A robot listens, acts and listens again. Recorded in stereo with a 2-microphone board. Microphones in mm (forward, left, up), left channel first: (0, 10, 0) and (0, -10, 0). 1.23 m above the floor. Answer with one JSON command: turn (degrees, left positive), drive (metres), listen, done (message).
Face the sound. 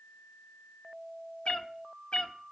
{"turn": 60}
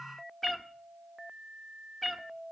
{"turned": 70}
{"turn": 10}
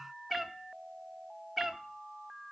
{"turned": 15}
{"done": "Found it: a cat meowing, straight ahead."}